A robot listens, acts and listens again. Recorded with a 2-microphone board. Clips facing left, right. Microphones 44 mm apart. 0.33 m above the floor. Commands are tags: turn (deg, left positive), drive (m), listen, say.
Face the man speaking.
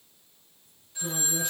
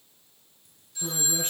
<turn deg="-45"/>
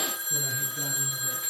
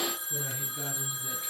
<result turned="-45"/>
<listen/>
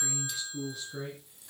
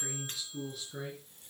<say>Facing the man speaking, over 4 m away.</say>